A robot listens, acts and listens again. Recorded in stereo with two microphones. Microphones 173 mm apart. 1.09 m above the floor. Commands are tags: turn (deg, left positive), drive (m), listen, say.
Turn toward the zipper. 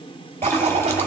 <turn deg="-40"/>
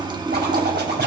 <turn deg="-95"/>
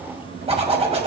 <turn deg="-40"/>
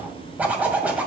<turn deg="-10"/>
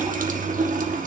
<listen/>
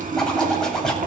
<say>Found it: a zipper, straight ahead, 2 to 4 m away.</say>